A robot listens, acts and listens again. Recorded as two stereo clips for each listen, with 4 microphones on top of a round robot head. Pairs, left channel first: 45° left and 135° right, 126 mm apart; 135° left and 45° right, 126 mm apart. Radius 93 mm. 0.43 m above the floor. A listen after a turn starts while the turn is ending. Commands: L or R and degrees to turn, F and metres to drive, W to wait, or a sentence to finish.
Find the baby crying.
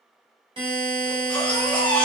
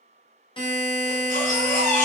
L125
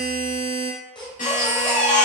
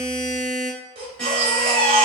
Facing the baby crying, 1 to 2 m away.